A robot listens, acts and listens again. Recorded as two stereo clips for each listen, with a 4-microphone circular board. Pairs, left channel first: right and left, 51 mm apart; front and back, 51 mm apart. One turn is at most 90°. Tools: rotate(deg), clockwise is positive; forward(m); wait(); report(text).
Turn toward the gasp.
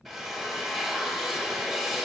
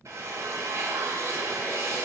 wait()
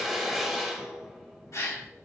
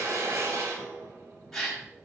rotate(80)
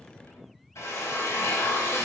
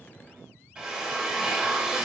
report("I heard a gasp from this way, but can't make it out now.")